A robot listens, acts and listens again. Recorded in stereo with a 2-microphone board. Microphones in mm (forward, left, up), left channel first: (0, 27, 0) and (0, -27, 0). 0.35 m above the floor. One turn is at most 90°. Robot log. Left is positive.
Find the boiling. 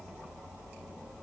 cmd idle
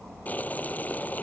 note: The boiling: about 30° left or 150° left.
cmd yaw +30
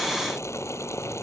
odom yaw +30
note: So it is at 115° left.
cmd yaw +90
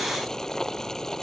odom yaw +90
note: The boiling is now 10° left.
cmd yaw +10
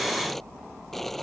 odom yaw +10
end: Found it: boiling, straight ahead.